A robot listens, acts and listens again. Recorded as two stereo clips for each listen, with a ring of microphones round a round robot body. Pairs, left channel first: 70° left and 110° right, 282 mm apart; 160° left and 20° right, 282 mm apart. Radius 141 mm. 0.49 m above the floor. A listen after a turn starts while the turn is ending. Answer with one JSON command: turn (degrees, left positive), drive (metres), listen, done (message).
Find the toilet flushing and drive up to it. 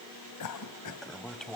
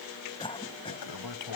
{"turn": 155}
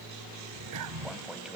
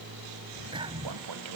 {"turn": -25}
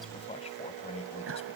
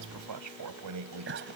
{"drive": 1.0}
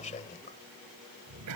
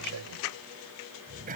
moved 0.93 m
{"drive": 1.0}
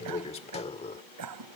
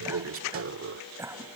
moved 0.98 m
{"drive": 1.0}
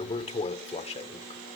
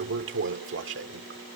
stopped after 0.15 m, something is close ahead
{"done": "I am next to the toilet flushing."}